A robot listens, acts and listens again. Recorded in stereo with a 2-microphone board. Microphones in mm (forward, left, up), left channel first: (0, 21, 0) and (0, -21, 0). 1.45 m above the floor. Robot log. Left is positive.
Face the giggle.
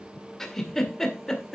cmd yaw +30
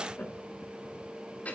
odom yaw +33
note: So it is at 140° left.
cmd yaw +140
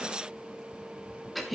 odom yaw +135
end: Facing the giggle, 1 to 2 m away.